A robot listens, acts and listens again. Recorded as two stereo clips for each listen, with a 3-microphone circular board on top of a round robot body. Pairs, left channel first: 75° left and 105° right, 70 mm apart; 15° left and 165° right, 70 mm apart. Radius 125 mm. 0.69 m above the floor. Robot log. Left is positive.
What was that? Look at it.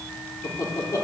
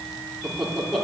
note: The laughter: 105° left.
cmd yaw +105
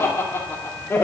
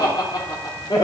note: The laughter is now 20° left.
cmd yaw +20
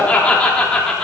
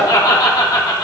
end: Found it: laughter, straight ahead.